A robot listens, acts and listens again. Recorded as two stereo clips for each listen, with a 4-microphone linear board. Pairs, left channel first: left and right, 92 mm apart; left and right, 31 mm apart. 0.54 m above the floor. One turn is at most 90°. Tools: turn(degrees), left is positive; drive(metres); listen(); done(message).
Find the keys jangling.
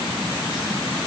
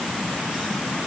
listen()
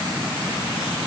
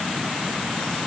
listen()
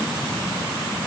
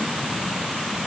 done("I can't make out keys jangling to turn to.")